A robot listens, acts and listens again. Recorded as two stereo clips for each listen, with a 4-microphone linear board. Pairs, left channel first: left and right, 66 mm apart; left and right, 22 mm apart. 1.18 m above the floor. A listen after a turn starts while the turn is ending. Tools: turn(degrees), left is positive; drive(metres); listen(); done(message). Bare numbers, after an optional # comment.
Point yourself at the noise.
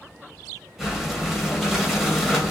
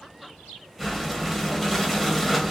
turn(-30)
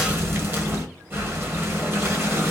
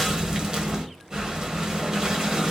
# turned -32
# So it is at 145° right.
turn(-145)
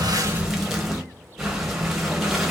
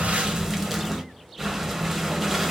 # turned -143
done("Facing the breathing, 1 to 2 m away.")